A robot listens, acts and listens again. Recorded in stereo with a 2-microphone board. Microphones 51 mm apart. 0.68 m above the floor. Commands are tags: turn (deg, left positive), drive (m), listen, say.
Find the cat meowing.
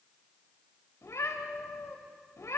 <turn deg="90"/>
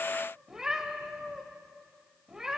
<turn deg="-10"/>
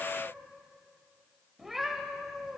<say>Found it: a cat meowing, straight ahead, 1 to 2 m away.</say>